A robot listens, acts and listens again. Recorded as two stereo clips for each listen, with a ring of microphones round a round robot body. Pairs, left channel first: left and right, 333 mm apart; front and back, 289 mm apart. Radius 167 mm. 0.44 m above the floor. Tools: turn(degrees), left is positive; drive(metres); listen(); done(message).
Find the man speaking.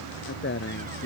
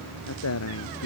turn(degrees=35)
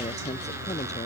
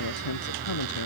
listen()
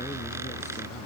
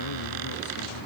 listen()
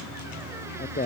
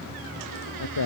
turn(degrees=25)
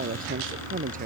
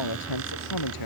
turn(degrees=-20)
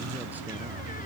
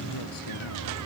listen()
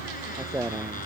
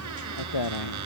done("Found it: a man speaking, straight ahead.")